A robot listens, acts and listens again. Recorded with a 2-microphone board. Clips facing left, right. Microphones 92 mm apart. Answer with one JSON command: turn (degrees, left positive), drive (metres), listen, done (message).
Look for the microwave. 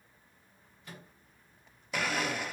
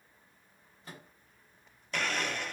{"turn": -35}
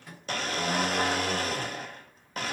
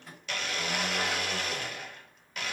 {"done": "Found it: a microwave, straight ahead."}